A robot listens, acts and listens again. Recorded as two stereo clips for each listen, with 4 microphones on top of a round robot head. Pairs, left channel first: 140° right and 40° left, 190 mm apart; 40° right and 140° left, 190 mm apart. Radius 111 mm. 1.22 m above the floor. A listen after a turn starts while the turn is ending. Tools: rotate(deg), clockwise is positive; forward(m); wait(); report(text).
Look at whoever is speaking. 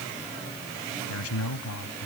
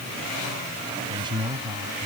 rotate(150)
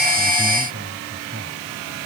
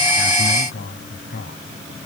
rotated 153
report("Facing the man speaking.")